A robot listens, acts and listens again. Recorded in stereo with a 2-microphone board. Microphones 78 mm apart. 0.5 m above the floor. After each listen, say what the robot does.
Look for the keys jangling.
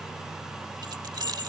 Turn 65° right.
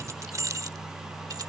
Turn 45° right.
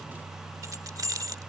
Turn 50° right.
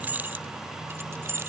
Turn 35° right.
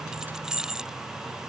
Turn 10° right.
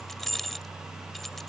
Found it: keys jangling, straight ahead.